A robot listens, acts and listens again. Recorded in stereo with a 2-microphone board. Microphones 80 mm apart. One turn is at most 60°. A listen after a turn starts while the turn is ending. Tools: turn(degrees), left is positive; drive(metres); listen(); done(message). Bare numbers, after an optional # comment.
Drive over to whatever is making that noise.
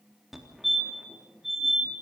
turn(30)
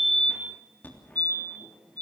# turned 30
# So it is at 155° left.
turn(60)
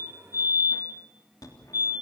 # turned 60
# The fire alarm is now 115° left.
turn(60)
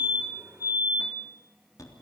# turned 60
# The fire alarm is now 60° left.
turn(60)
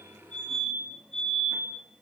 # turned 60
drive(1.0)
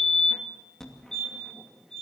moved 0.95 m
drive(1.0)
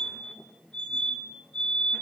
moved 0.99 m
# The fire alarm is now 25° left.
turn(25)
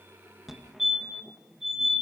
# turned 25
# The fire alarm is now 10° right.
turn(-10)
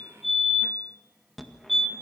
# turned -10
drive(1.0)
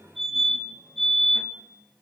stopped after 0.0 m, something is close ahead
done("Arrived at the fire alarm, straight ahead.")